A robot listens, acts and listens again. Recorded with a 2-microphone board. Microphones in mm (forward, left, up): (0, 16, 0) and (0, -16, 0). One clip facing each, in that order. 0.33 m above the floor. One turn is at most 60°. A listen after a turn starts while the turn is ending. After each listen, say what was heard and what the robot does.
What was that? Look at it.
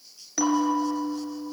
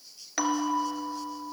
The bell: about 25° right or 155° right. Turn 25° right.
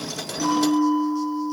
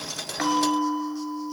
So it is at 130° right. Turn 60° right.
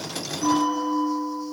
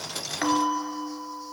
The bell is now 65° right. Turn 60° right.
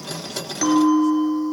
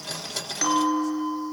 Found it: a bell, straight ahead.